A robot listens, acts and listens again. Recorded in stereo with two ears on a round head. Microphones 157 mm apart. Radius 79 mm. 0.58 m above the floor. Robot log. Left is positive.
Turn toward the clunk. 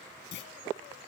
note: The clunk: about 70° left or 110° left.
cmd yaw +70
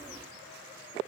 cmd idle
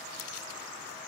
end: I heard a clunk, but can't make it out now. It was about straight ahead or 40° left.